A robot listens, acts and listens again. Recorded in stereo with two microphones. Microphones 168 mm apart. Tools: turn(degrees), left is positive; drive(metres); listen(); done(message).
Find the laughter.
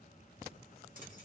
listen()
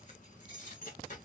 listen()
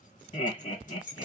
turn(degrees=45)
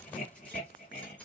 turn(degrees=85)
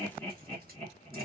turn(degrees=10)
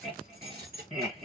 done("Facing the laughter, 1 to 2 m away.")